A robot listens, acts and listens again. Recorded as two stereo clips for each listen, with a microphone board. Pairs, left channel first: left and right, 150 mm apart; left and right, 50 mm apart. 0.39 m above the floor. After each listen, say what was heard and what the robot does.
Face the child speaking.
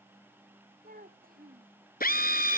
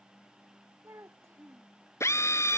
The child speaking: about 75° right or 105° right. Turn 75° right.
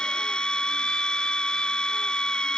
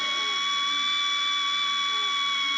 Keep listening.
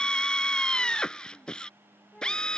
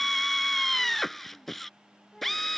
Facing the child speaking.